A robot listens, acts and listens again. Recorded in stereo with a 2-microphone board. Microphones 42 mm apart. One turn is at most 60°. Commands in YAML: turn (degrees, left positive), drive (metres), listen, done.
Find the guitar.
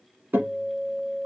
turn: -55
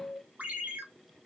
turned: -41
turn: -60
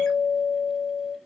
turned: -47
turn: -25
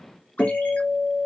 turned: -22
done: "Facing the guitar, 2 to 4 m away."